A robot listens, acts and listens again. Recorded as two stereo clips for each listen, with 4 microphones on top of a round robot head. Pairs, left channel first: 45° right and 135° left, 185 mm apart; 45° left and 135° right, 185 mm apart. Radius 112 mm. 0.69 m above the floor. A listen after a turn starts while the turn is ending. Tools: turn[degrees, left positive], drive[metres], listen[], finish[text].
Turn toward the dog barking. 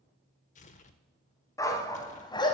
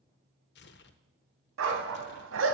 Thought: The dog barking: 110° right.
Action: turn[-110]
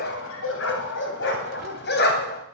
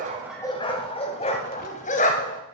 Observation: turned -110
Action: finish[Found it: a dog barking, straight ahead, 2 to 4 m away.]